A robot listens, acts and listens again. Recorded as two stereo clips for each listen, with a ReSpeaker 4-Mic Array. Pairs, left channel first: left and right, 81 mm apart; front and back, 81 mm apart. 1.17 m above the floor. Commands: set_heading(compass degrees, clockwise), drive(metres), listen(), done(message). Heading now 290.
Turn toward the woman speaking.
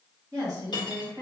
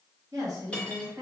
set_heading(60)
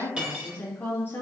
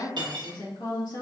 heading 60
set_heading(30)
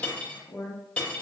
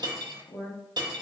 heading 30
set_heading(15)
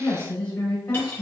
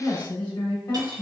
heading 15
set_heading(355)
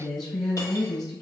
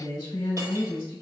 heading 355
done("Found it: a woman speaking, straight ahead.")